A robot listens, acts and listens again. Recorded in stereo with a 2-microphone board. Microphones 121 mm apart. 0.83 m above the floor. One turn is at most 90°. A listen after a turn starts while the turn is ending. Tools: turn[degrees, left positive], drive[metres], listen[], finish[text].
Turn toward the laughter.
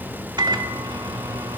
Action: listen[]
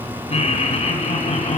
Thought: The laughter: about 70° left or 110° left.
Action: turn[70]
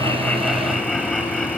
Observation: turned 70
Action: finish[Found it: laughter, straight ahead, over 4 m away.]